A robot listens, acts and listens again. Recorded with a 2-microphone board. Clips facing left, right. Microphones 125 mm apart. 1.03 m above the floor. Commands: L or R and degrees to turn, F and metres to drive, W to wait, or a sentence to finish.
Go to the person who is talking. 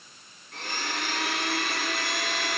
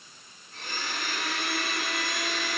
W
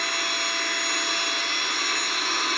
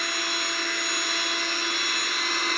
W
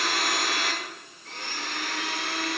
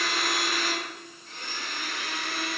I can't make out anyone speaking to turn to.